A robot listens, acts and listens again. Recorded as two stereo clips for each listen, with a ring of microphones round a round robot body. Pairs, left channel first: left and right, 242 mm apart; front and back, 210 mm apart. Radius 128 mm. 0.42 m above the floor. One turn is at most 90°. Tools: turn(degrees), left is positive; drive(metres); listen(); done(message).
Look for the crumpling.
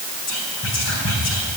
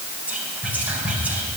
listen()
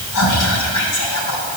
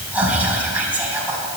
listen()
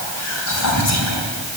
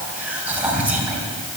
done("I can't make out crumpling, only whispering.")